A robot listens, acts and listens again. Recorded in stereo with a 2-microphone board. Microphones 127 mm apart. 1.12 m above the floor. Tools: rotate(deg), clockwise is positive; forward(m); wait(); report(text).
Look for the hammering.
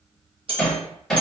rotate(-30)
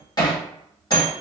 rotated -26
rotate(-150)
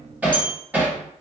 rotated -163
rotate(10)
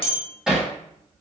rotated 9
report("Facing the hammering, 1 to 2 m away.")